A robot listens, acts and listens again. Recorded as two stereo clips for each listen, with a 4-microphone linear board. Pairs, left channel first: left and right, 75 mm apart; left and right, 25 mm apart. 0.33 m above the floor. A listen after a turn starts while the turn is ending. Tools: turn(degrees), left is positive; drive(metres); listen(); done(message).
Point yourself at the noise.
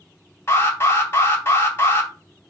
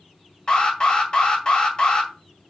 turn(degrees=30)
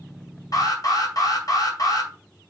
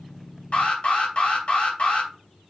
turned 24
turn(degrees=120)
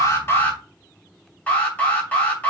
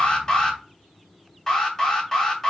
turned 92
turn(degrees=30)
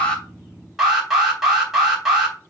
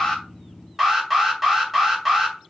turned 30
done("Found it: an alarm, straight ahead, 2 to 4 m away.")